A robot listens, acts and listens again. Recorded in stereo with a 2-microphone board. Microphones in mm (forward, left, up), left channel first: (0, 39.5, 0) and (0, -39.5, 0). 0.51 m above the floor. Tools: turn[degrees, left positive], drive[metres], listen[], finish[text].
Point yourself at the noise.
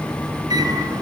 Thought: The microwave: about 50° right or 130° right.
Action: turn[-50]
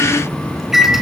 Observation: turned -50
Action: finish[Found it: a microwave, straight ahead.]